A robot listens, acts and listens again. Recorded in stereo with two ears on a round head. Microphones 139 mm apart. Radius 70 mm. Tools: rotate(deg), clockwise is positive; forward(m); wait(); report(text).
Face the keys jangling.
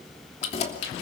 rotate(-40)
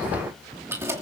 rotate(20)
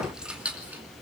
rotate(10)
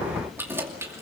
rotate(20)
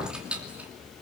rotate(10)
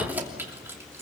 rotate(15)
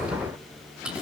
report("Facing the keys jangling, 2 to 4 m away.")